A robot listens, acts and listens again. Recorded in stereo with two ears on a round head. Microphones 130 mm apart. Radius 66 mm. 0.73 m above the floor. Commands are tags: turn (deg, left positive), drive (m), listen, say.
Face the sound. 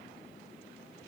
<listen/>
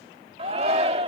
<turn deg="-40"/>
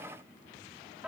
<say>Found it: a shout, straight ahead.</say>